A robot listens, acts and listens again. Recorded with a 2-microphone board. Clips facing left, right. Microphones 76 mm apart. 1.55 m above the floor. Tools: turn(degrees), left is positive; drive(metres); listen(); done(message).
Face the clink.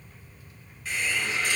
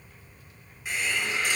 listen()
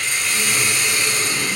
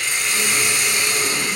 listen()
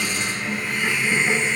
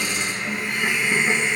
done("I can't make out a clink to turn to.")